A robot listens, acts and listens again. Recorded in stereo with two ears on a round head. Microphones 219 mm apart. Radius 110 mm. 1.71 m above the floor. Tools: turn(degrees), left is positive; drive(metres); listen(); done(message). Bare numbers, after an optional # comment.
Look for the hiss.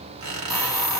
turn(30)
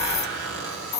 # So it is at 150° left.
turn(150)
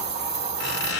# The hiss is now 35° right.
turn(-35)
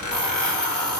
done("Facing the hiss.")